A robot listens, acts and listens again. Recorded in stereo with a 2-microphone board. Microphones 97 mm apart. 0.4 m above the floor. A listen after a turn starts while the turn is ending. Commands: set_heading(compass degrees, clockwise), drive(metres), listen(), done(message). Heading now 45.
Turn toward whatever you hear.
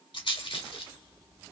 set_heading(335)
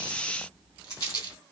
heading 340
set_heading(300)
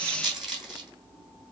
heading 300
done("Facing the rattle, 2 to 4 m away.")